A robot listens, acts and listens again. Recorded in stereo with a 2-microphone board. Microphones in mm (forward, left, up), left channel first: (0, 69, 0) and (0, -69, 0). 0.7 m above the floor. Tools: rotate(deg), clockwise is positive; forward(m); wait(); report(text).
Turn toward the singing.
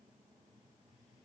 wait()
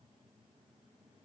wait()
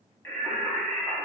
rotate(-30)
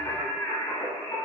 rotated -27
rotate(-135)
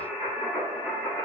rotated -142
report("Facing the singing, under 1 m away.")